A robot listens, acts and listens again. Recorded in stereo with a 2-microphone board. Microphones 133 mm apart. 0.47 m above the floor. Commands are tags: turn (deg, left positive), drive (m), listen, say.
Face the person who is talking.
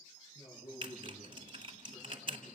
<turn deg="40"/>
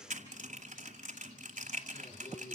<turn deg="100"/>
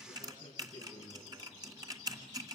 <turn deg="30"/>
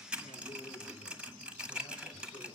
<listen/>
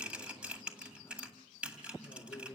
<turn deg="10"/>
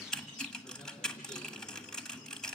<listen/>
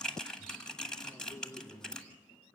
<say>Facing the man speaking, over 4 m away.</say>